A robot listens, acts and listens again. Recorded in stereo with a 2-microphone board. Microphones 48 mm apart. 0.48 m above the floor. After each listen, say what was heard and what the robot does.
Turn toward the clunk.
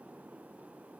Keep listening.
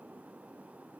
Keep listening.
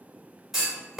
Turn 30° right.
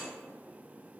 Keep listening.
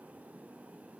I heard a clunk, but can't make it out now. It was about 25° left or 145° right.